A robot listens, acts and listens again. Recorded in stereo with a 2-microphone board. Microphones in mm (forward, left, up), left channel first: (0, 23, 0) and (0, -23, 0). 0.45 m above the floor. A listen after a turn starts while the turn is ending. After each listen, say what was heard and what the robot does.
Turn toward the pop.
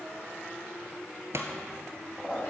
Turn 90° right.
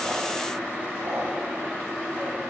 Facing where the pop came from. I can't hear it now.